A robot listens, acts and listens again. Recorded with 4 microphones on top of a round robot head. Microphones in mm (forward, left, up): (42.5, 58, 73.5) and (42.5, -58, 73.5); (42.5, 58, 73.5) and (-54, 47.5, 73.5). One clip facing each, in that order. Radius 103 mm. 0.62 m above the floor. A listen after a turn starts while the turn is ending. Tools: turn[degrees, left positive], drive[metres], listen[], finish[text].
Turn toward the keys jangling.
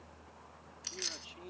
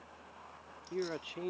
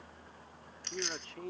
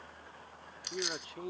Thought: The keys jangling: 105° left.
Action: turn[105]
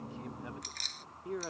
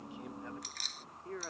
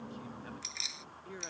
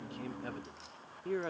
Action: finish[Facing the keys jangling.]